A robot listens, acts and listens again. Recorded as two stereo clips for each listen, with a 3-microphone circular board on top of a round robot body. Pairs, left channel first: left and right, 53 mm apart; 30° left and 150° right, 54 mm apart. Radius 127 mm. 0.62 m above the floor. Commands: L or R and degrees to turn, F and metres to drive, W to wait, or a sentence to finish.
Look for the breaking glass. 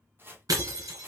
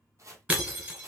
R90
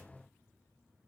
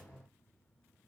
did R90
I heard breaking glass from this way, but can't make it out now.